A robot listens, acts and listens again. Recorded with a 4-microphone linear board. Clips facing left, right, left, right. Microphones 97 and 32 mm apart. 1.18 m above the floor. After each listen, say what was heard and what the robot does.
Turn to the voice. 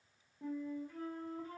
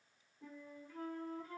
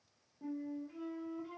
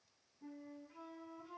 Keep listening.
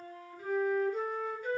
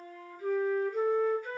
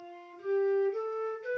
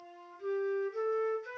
Keep listening.
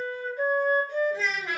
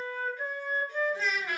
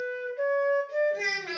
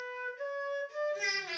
Turn 90° left.
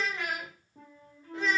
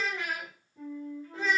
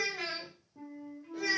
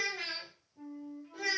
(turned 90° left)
Found it: a child speaking, straight ahead.